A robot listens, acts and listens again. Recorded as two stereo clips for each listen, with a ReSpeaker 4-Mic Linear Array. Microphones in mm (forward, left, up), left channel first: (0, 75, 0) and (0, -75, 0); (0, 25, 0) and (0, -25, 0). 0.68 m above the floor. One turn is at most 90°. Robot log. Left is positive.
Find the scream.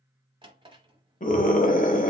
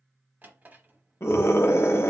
note: The scream: about 55° left or 125° left.
cmd yaw +55
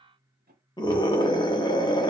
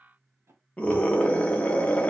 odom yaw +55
note: So it is at 35° left.
cmd yaw +35
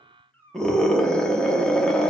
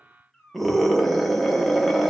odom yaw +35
end: Found it: a scream, straight ahead.